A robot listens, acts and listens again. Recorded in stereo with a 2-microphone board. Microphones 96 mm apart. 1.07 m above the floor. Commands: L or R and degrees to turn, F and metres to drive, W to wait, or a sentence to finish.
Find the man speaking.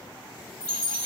W
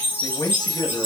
L40
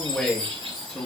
Facing the man speaking, under 1 m away.